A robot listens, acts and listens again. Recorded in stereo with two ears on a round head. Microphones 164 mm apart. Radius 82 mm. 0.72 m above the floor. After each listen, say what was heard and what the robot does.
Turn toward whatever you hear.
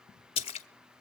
The splash: about 30° left or 150° left. Turn 30° left.
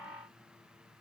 Keep listening.
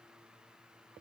I heard a splash, but can't make it out now. It was about straight ahead or 120° left.